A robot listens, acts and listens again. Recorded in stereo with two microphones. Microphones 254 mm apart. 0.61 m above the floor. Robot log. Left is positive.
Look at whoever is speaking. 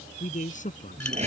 note: The man speaking: about 30° left or 150° left.
cmd yaw +30
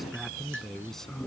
end: Facing the man speaking.